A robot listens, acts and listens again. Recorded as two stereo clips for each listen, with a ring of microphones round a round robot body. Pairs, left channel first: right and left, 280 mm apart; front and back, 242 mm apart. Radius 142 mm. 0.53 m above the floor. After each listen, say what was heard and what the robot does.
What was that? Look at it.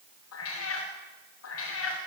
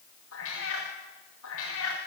The cat meowing: 45° right. Turn 45° right.
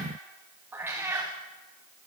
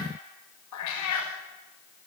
The cat meowing is now 10° left. Turn 10° left.
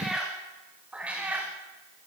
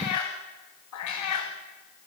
Found it: a cat meowing, straight ahead, over 4 m away.